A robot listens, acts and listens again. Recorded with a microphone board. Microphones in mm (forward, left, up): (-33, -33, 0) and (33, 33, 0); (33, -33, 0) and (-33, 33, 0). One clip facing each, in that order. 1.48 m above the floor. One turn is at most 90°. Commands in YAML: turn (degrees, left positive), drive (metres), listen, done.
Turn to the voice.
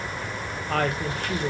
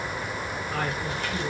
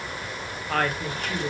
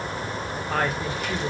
turn: -90
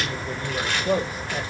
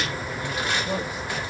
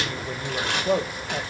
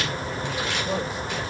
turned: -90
turn: -85
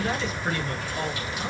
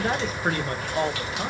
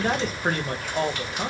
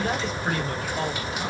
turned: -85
done: "Facing the woman speaking, 1 to 2 m away."